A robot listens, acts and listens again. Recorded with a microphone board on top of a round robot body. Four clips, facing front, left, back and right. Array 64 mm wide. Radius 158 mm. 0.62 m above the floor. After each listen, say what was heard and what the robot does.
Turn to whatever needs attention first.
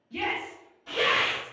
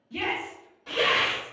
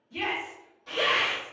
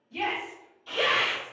The shout: 50° left. Turn 50° left.
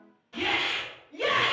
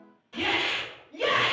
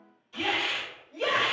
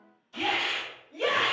The shout is now 15° left. Turn 15° left.
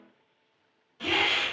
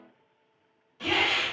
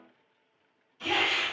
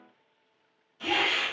Keep listening.
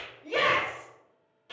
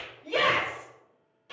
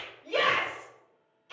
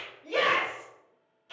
Facing the shout, 1 to 2 m away.